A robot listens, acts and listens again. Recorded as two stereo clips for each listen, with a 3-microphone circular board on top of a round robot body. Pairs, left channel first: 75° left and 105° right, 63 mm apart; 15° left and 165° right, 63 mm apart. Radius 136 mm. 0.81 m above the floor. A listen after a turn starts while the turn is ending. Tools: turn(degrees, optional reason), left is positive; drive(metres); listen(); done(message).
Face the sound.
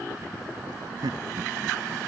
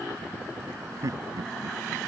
turn(degrees=-130, reason="The laughter: 130° right.")
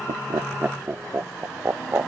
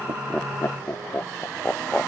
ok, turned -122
turn(degrees=-55, reason="The laughter is now 55° right.")
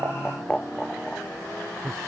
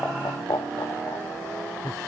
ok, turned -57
turn(degrees=-10, reason="The laughter is now 10° right.")
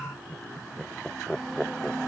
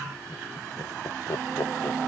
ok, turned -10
done("Facing the laughter.")